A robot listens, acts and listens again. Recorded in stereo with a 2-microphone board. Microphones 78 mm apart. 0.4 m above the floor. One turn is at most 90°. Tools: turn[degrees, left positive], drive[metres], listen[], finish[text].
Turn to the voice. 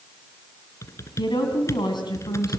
Thought: The woman speaking: about 70° left or 110° left.
Action: turn[70]
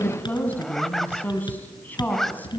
Thought: So it is at 25° left.
Action: turn[25]
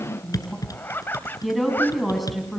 Action: finish[Facing the woman speaking, over 4 m away.]